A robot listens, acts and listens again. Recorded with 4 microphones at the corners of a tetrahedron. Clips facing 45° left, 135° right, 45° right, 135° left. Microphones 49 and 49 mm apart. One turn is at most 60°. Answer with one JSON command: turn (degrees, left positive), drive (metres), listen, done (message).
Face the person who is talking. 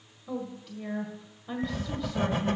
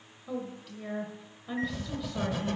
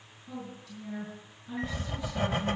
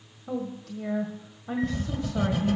{"turn": 60}
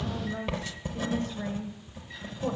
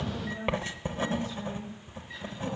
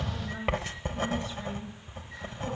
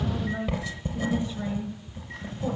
{"turn": 60}
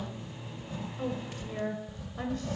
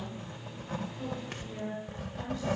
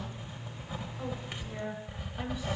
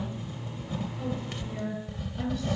{"turn": 25}
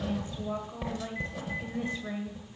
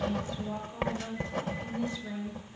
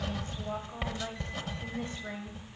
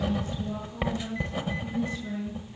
{"turn": -10}
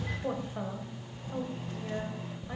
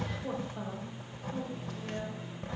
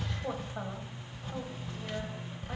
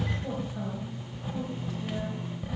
{"done": "Found it: a woman speaking, straight ahead, 1 to 2 m away."}